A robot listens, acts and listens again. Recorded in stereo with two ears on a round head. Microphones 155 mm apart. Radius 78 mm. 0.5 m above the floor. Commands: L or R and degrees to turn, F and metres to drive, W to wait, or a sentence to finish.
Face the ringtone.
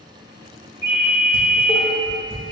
R70
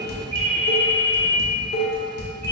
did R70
R35
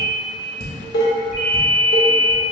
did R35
Found it: a ringtone, straight ahead, 1 to 2 m away.